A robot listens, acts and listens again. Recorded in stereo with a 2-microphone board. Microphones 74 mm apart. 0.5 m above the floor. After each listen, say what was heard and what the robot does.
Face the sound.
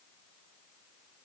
Keep listening.
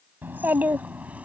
The child speaking: about 20° right or 160° right. Turn 20° right.
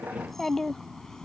So it is at 10° left. Turn 10° left.
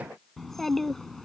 Found it: a child speaking, straight ahead.